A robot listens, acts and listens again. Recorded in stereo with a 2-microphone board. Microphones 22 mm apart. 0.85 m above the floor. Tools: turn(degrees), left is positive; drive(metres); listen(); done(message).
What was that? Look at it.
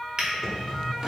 turn(degrees=-40)
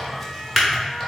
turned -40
done("Found it: a drawer, straight ahead.")